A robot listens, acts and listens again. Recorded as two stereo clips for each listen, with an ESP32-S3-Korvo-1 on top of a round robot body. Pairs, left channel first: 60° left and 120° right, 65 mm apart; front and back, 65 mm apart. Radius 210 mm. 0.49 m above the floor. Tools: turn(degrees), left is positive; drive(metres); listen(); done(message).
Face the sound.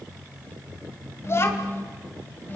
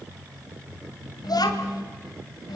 done("Facing the child speaking.")